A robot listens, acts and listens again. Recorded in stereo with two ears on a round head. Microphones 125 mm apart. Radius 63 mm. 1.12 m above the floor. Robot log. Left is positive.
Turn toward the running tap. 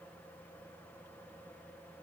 cmd idle
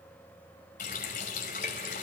note: The running tap: about 60° left or 120° left.
cmd yaw +60
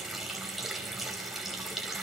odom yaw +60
end: Found it: a running tap, straight ahead.